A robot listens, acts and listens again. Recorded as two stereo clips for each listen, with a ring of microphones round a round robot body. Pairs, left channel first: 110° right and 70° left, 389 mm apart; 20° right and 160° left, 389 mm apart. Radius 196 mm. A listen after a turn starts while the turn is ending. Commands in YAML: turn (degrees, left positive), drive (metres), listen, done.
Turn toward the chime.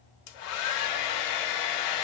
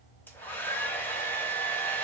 listen: true
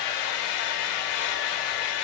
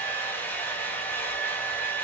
listen: true
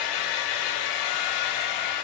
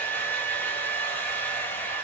done: "I can't make out a chime, only a hair dryer."